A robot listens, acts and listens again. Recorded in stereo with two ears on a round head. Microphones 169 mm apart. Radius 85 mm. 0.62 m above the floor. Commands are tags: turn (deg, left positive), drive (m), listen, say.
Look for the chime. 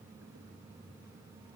<listen/>
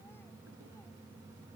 <listen/>
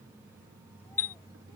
<turn deg="30"/>
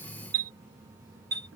<turn deg="-20"/>
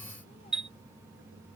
<say>Found it: a chime, straight ahead.</say>